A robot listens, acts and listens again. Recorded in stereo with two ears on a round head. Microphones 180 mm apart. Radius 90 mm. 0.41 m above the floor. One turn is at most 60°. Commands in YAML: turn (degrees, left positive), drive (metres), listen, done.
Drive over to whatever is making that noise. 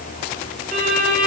turn: -45
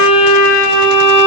drive: 1.0
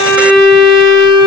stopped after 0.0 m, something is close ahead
done: "Something is in my way. I am facing the violin but have not reached it."